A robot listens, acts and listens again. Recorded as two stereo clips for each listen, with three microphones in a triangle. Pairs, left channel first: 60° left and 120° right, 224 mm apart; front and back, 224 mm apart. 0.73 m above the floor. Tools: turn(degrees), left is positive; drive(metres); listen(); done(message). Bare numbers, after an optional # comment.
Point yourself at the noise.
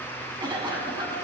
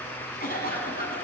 # The cough: 50° right.
turn(-50)
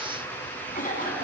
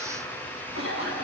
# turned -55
done("Found it: a cough, straight ahead.")